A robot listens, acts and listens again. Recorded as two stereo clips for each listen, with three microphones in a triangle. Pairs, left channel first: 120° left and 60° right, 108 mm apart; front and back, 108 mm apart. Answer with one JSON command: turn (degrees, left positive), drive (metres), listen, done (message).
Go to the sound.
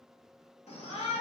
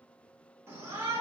{"turn": 115}
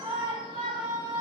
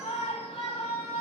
{"turn": -15}
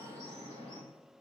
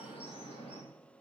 {"drive": 1.0}
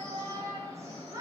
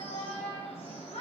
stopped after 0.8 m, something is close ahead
{"done": "Blocked. The shout is further on, straight ahead."}